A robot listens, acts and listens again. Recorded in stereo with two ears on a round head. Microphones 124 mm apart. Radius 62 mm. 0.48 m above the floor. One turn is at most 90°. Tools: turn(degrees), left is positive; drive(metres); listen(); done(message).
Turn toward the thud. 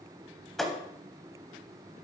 turn(degrees=30)
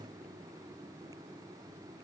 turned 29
listen()
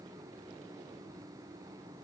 done("I heard a thud, but can't make it out now. It was about 30° right or 150° left.")